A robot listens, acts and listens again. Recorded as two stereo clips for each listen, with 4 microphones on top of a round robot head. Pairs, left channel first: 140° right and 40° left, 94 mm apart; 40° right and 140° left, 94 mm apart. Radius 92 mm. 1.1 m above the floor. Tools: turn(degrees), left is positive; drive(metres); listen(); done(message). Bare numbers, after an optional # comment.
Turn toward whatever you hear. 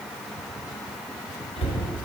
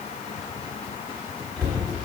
# The cupboard door: 130° right.
turn(-130)
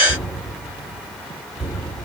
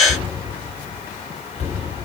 # The cupboard door is now 40° right.
turn(-40)
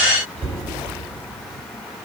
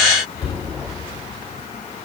# The cupboard door is now 15° left.
turn(15)
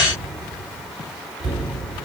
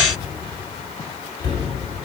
done("Found it: a cupboard door, straight ahead.")